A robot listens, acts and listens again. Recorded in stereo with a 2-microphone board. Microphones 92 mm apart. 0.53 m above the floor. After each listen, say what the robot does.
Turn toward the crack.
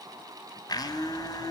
Keep listening.
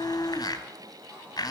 Keep listening.
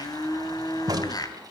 Turn 45° right.
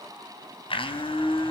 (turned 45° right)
Keep listening.
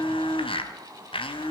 I heard a crack, but can't make it out now. It was about straight ahead or 90° right.